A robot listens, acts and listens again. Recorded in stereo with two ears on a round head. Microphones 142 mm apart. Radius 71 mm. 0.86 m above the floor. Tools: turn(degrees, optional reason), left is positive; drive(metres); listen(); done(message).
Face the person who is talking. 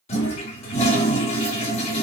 listen()
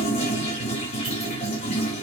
listen()
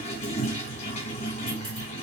done("I can't make out anyone speaking, only a toilet flushing.")